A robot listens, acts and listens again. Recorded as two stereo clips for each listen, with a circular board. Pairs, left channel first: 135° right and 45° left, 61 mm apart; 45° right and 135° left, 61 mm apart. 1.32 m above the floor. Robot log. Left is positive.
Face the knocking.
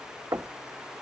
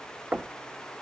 note: The knocking: 70° left.
cmd yaw +70
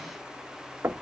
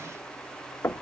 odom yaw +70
end: Found it: knocking, straight ahead, under 1 m away.